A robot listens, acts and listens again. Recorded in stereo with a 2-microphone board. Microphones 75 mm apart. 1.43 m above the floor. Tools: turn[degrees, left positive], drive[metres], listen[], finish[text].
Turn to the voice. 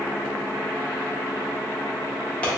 Action: listen[]
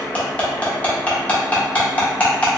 Action: listen[]
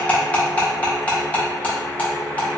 Action: finish[I can't make out anyone speaking, only cutlery clinking.]